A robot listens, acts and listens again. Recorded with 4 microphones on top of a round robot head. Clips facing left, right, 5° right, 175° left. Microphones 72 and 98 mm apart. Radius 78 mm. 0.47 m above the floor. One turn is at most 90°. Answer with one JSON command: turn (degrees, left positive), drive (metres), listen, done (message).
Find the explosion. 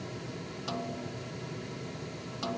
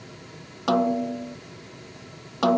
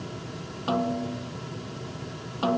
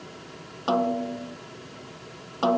{"listen": true}
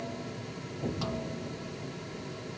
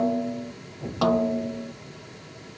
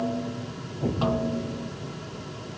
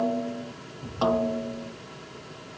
{"done": "Facing the explosion."}